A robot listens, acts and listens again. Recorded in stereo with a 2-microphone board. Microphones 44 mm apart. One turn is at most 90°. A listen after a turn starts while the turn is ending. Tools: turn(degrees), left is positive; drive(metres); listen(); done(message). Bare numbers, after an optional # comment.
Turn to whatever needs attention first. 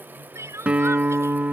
turn(-90)
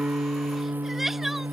listen()
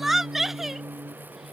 done("Found it: crying, straight ahead.")